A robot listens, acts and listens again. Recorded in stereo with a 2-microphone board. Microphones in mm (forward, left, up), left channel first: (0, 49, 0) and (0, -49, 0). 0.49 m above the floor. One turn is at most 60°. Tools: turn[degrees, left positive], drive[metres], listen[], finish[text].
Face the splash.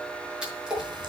Action: turn[-30]
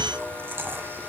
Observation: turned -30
Action: listen[]
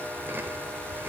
Action: finish[I heard a splash, but can't make it out now. It was about 20° left or 140° right.]